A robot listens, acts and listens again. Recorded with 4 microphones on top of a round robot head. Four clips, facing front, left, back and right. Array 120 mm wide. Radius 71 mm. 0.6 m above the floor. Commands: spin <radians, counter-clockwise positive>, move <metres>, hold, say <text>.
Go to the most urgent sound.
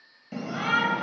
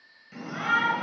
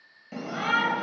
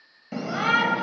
spin -1.66
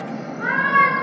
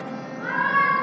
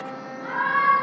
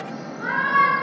spin -0.17
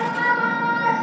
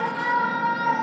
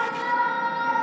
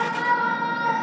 move 1.0
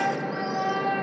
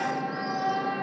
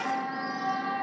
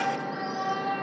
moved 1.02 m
move 1.0
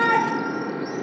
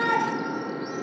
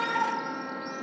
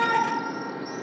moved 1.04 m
spin 0.17
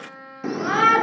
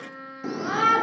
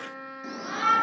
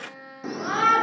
move 1.0
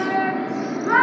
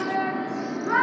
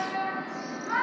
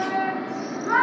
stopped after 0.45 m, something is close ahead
say Arrived at the shout, straight ahead.